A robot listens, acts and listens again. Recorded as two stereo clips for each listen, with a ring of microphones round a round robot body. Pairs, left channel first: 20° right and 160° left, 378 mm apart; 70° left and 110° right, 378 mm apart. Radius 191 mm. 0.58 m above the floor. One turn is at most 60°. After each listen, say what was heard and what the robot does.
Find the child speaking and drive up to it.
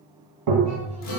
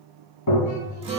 Keep listening.
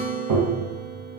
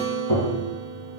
Keep listening.
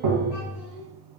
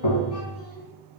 I can't make out a child speaking to turn to.